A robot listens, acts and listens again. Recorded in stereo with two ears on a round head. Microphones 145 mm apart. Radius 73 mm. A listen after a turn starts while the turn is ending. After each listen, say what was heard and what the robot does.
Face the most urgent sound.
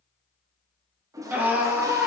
Turn 30° right.
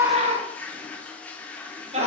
So it is at 140° right. Turn 140° right.
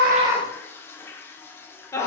The scream is now 15° left. Turn 15° left.
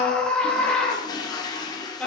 Facing the scream, 1 to 2 m away.